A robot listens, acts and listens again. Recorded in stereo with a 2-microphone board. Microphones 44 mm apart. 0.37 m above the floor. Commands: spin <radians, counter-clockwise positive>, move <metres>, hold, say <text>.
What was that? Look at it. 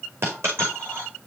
spin -1.22
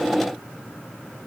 hold
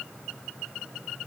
say I heard a dropped coin, but can't make it out now. It was about straight ahead or 40° right.